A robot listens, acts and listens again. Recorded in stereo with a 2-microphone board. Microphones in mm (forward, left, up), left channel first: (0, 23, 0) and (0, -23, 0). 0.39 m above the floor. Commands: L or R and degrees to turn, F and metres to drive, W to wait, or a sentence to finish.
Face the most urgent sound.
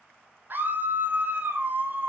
R45
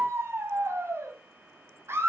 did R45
R85
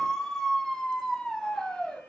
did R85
L15
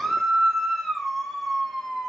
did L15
Facing the scream, 2 to 4 m away.